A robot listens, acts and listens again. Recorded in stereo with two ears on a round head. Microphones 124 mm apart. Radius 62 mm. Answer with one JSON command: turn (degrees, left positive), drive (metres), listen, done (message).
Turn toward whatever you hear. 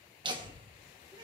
{"turn": -35}
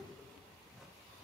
{"done": "Found it: laughter, straight ahead, 1 to 2 m away."}